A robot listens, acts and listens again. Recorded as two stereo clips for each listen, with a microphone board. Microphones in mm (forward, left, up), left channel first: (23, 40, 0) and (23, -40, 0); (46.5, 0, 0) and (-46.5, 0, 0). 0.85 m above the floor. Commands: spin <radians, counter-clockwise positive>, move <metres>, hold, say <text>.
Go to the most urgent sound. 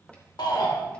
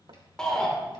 spin 1.40
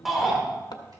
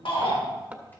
move 1.0
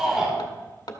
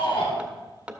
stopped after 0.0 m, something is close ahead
say Blocked. The shout is further on, straight ahead.